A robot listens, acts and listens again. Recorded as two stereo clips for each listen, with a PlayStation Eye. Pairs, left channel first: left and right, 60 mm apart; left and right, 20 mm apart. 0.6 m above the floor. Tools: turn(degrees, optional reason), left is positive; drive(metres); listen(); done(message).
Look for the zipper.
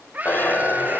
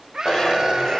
turn(degrees=30, reason="The zipper: about 30° left or 150° left.")
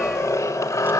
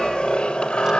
turn(degrees=120, reason="So it is at 120° left.")
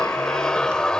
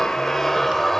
turn(degrees=15, reason="The zipper is now 15° left.")
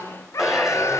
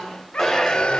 done("Facing the zipper.")